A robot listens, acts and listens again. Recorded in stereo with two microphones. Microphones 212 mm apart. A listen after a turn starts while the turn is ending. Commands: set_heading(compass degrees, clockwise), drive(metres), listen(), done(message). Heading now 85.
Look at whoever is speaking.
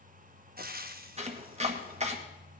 listen()
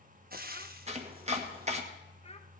set_heading(55)
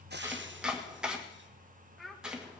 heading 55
done("Facing the child speaking.")